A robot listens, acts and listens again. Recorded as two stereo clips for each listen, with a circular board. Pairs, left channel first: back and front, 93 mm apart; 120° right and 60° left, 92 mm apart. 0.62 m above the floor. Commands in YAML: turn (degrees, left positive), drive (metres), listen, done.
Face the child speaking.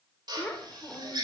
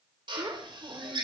turn: 105
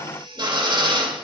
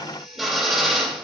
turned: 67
turn: 35
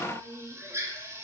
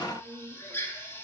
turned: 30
done: "Found it: a child speaking, straight ahead."